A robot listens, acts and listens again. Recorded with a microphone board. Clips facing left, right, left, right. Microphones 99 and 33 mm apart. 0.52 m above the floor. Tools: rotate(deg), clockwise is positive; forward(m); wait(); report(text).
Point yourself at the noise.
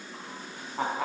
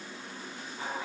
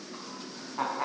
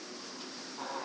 rotate(-60)
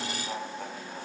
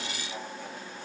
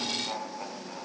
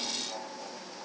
rotate(-55)
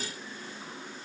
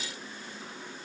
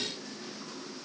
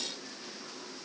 wait()
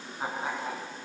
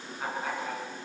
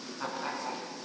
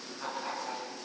rotate(-20)
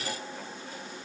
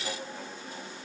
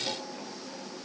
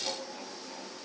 wait()
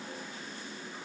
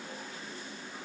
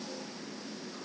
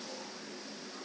wait()
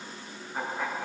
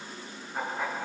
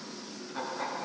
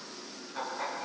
report("Found it: laughter, straight ahead.")